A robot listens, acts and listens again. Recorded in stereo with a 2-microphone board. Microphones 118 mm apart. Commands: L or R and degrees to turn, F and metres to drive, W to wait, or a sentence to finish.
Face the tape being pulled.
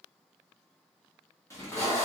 L25
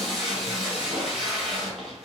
Facing the tape being pulled.